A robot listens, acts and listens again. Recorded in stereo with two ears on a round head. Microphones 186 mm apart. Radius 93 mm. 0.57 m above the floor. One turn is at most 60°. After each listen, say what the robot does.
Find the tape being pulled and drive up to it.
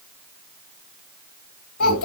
Keep listening.
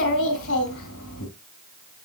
Keep listening.
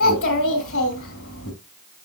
I can't make out tape being pulled, only a child speaking.